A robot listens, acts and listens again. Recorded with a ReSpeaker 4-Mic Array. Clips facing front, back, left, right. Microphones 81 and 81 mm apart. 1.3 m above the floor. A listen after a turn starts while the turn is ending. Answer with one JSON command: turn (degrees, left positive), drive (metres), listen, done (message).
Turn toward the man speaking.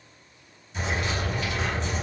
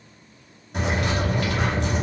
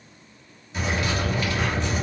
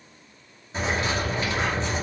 {"listen": true}
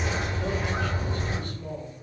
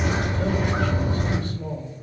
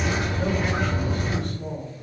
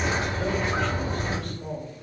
{"turn": -175}
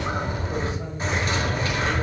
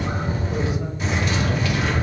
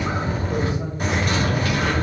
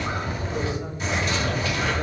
{"listen": true}
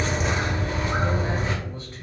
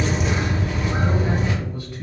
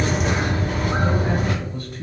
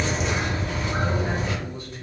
{"listen": true}
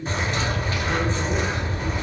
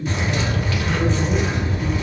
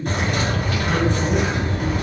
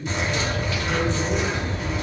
{"turn": 70}
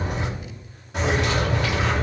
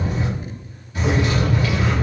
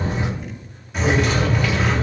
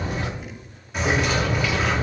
{"listen": true}
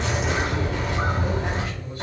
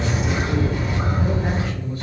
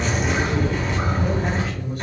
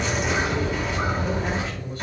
{"turn": 15}
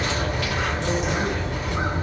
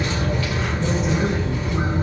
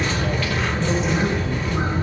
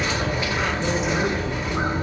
{"listen": true}
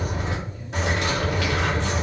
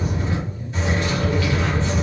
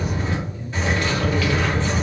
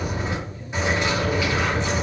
{"listen": true}
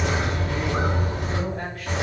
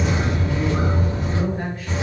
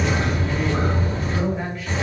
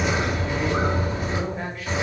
{"done": "Facing the man speaking."}